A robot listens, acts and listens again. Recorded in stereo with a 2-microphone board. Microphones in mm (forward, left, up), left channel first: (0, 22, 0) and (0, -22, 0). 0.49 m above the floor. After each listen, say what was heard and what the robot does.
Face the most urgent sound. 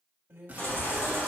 The baby crying: about 65° left or 115° left. Turn 65° left.
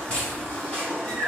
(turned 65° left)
So it is at 25° left. Turn 25° left.
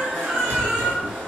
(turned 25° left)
Facing the baby crying, 2 to 4 m away.